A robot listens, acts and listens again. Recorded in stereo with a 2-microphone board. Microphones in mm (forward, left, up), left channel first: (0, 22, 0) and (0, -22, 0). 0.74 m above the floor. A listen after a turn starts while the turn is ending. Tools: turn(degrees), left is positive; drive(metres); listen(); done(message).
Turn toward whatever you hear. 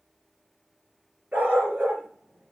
turn(degrees=-30)
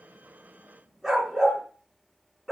done("Found it: a dog barking, straight ahead, 2 to 4 m away.")